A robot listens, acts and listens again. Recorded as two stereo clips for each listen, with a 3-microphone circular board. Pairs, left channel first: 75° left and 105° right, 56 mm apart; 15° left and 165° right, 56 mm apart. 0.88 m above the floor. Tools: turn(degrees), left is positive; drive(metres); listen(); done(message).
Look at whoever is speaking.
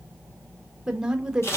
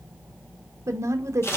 turn(degrees=180)
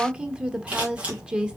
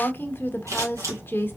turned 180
turn(degrees=-35)
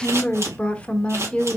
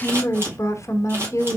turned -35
done("Facing the woman speaking, under 1 m away.")